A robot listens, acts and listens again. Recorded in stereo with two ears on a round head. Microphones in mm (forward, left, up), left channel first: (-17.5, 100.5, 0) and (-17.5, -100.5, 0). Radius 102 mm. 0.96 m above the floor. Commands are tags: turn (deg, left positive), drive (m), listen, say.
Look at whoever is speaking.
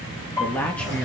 <turn deg="30"/>
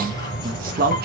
<turn deg="-40"/>
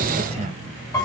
<listen/>
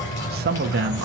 <turn deg="-45"/>
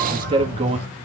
<turn deg="-25"/>
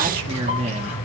<turn deg="-25"/>
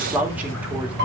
<say>Facing the man speaking, 2 to 4 m away.</say>